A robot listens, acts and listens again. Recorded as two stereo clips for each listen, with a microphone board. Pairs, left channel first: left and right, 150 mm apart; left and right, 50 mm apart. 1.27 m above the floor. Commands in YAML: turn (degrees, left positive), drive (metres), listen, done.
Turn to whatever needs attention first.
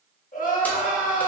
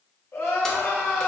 turn: 60
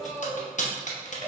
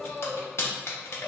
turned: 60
turn: 20
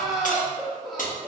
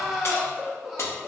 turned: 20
done: "Facing the crying."